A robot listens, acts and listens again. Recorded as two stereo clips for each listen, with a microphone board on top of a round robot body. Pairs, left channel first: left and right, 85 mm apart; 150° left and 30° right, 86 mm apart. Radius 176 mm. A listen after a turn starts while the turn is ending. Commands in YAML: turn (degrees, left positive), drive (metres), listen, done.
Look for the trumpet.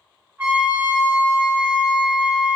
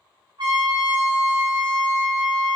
turn: -20
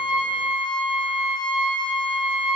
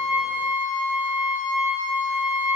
done: "Facing the trumpet."